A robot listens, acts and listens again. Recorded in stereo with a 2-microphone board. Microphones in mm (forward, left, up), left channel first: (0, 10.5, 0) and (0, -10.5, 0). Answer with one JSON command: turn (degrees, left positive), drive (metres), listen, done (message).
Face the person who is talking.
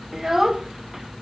{"turn": -25}
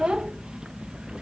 {"turn": -130}
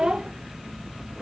{"turn": -35}
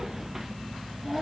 {"turn": -10}
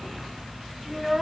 {"done": "Found it: a child speaking, straight ahead."}